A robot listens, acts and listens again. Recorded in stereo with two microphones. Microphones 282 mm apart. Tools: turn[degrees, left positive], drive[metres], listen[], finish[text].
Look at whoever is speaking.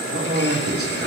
Thought: The man speaking: about 50° right or 130° right.
Action: turn[-50]
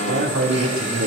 Thought: So it is at 75° right.
Action: turn[-75]
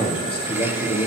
Thought: The man speaking is now 20° left.
Action: turn[20]
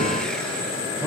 Action: listen[]
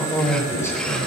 Thought: The man speaking is now 10° left.
Action: turn[10]
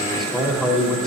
Action: finish[Found it: a man speaking, straight ahead, over 4 m away.]